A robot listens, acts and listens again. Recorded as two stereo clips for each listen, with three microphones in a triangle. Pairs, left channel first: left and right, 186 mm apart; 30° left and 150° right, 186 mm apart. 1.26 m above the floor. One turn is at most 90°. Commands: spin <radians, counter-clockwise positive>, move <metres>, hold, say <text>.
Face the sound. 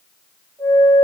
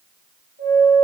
spin -1.57
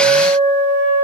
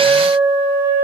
spin -1.05
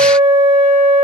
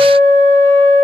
spin -0.70
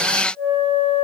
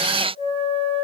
say Found it: a flute, straight ahead, 1 to 2 m away.